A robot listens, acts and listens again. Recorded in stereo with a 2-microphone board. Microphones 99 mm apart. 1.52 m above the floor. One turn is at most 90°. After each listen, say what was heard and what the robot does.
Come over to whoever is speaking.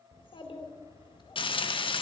The child speaking: about 55° left or 125° left. Turn 55° left.
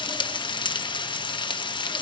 Keep listening.
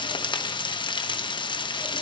Keep listening.
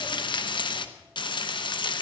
I heard a child speaking, but can't make it out now. It was about straight ahead or 70° left. I did not reach it.